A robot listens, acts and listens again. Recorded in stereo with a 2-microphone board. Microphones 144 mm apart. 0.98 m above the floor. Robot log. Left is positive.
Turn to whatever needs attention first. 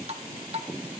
cmd idle
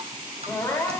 note: The crying: about 20° left or 160° left.
cmd yaw +20
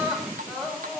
end: Facing the crying, 2 to 4 m away.